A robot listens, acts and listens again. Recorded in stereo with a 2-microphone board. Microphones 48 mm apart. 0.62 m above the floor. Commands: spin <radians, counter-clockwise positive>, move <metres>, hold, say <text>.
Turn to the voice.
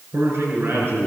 spin -1.05
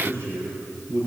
spin -1.05
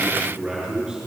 spin -0.26
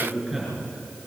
say Found it: a man speaking, straight ahead.